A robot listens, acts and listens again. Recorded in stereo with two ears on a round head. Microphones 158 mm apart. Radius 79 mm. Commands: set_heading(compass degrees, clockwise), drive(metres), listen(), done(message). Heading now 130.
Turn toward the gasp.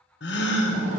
set_heading(60)
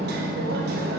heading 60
listen()
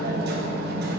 done("I heard a gasp, but can't make it out now. It was about straight ahead or 40° left.")